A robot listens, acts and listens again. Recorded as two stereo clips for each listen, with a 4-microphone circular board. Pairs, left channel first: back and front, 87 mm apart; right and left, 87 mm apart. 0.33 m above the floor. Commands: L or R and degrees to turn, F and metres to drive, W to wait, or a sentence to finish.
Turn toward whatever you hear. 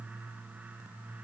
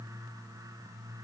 W
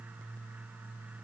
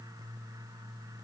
W
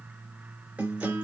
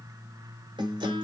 L75
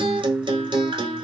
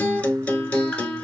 R15
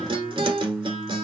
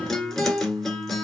Facing the guitar.